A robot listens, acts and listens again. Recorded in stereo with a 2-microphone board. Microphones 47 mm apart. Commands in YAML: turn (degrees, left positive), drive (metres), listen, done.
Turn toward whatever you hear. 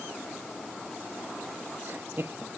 turn: -55
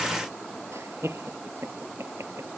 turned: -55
turn: -65
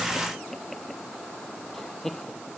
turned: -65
done: "Facing the laughter."